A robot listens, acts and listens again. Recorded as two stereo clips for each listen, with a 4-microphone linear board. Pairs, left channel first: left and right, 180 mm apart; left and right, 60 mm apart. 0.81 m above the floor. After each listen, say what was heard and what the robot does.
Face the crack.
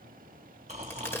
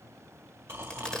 Turn 30° left.
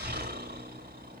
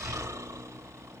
Keep listening.
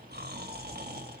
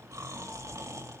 I heard a crack, but can't make it out now. It was about 15° right or 135° left.